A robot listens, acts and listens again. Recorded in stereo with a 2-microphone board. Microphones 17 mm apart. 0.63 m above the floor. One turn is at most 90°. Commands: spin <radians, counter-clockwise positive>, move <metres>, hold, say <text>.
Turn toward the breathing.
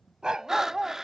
spin -0.44
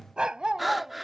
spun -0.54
say Facing the breathing.